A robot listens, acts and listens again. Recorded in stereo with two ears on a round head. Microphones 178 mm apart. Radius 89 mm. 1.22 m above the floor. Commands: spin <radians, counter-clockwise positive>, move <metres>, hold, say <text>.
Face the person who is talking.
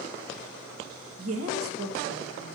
spin -1.57
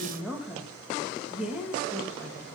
say Facing the woman speaking.